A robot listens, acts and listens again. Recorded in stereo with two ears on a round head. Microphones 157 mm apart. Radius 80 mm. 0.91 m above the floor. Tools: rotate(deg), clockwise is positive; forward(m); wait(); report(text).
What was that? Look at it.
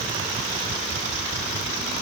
wait()
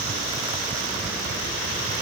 wait()
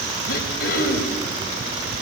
rotate(-60)
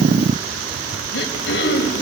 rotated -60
rotate(-60)
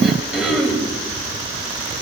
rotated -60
report("Facing the throat clearing, over 4 m away.")